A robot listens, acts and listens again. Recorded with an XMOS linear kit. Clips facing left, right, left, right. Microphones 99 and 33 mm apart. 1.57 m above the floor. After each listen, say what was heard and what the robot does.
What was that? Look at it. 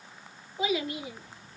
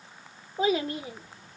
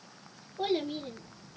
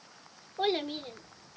The child speaking: about 40° right or 140° right. Turn 40° right.
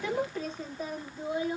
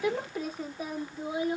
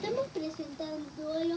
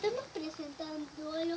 So it is at 10° right. Turn 10° right.
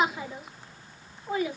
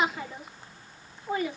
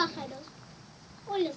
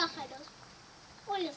Facing the child speaking.